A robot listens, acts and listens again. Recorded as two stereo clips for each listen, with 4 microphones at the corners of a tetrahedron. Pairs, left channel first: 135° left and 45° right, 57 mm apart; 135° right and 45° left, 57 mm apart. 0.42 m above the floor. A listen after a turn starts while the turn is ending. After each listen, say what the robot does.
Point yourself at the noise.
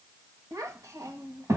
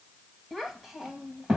Turn 30° right.
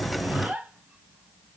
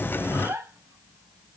Turn 15° left.
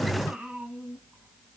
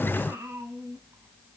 Turn 30° left.
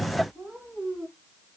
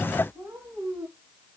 Turn 20° left.
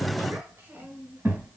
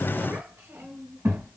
Facing the child speaking.